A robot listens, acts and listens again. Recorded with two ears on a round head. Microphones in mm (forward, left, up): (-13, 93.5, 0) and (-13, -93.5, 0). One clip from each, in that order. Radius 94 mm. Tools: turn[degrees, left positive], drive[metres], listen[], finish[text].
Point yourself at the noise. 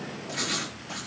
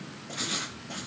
Thought: The writing: about 60° left or 120° left.
Action: turn[60]
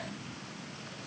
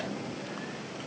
Action: listen[]
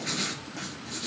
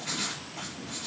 Thought: So it is at 65° left.
Action: turn[65]
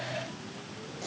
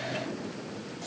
Action: listen[]
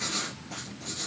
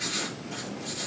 Action: finish[Found it: writing, straight ahead, over 4 m away.]